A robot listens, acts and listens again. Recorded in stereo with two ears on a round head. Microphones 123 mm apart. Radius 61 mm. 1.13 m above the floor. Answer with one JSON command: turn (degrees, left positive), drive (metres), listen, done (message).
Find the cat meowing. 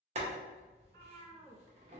{"turn": -60}
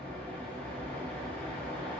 {"listen": true}
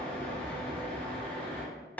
{"listen": true}
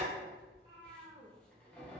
{"turn": -50}
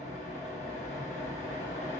{"listen": true}
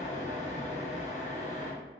{"listen": true}
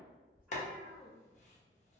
{"turn": -10}
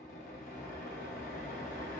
{"listen": true}
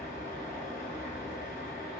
{"listen": true}
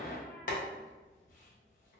{"done": "Facing where the cat meowing came from. I can't hear it now."}